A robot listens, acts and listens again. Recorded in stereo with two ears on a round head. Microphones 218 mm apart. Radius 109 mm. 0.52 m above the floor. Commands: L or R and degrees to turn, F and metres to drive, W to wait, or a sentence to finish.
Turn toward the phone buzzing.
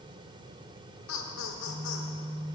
R35
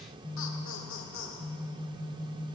Facing the phone buzzing, 1 to 2 m away.